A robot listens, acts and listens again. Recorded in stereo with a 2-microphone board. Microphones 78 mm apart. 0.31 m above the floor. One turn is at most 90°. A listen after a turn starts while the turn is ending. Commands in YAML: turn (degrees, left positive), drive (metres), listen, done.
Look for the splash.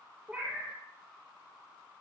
listen: true
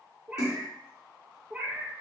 turn: 40
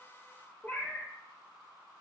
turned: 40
listen: true
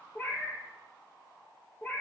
done: "I heard a splash, but can't make it out now. It was about straight ahead or 100° left."